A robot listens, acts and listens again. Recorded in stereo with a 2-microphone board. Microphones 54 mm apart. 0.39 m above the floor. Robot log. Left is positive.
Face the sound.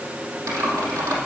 cmd yaw -90
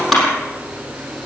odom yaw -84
end: Facing the typing on a keyboard.